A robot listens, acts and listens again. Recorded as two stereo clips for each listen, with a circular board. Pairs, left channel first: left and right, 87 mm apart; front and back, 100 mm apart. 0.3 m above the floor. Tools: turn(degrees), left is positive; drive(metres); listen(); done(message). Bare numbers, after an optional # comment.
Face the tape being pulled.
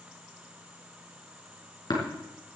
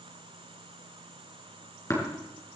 listen()
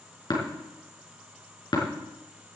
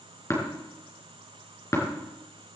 listen()
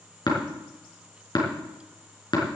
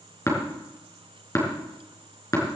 done("I can't make out tape being pulled to turn to.")